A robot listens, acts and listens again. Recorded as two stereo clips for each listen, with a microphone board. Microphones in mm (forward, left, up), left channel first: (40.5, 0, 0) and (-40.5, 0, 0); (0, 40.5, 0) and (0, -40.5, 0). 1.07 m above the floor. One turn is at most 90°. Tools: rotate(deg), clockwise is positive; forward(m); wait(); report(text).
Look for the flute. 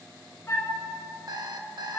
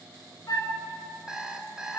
rotate(-55)
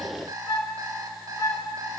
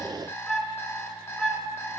report("Found it: a flute, straight ahead.")